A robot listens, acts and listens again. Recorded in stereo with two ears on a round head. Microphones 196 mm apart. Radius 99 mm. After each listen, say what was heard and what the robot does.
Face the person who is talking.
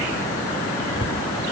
Keep listening.
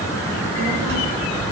The child speaking: about 55° right or 125° right. Turn 55° right.
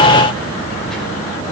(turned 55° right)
Keep listening.
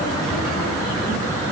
Keep listening.
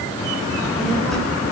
Found it: a child speaking, straight ahead, over 4 m away.